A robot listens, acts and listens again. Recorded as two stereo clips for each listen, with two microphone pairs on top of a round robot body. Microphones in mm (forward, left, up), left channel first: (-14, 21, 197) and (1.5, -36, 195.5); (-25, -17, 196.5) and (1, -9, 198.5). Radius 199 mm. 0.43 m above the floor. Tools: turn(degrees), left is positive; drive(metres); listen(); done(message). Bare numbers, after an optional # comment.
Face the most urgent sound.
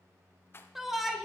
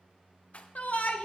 # The shout: 160° right.
turn(-160)
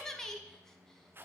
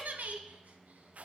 # The shout is now 25° left.
turn(25)
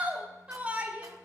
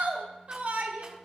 # The shout is now 10° right.
turn(-10)
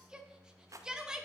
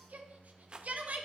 done("Found it: a shout, straight ahead, 1 to 2 m away.")